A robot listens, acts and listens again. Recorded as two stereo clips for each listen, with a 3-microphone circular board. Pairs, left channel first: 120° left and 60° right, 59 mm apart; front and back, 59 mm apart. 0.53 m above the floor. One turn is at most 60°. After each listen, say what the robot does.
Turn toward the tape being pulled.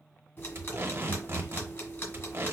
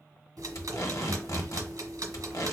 Turn 10° right.
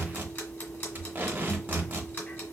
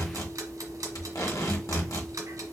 Facing the tape being pulled, 1 to 2 m away.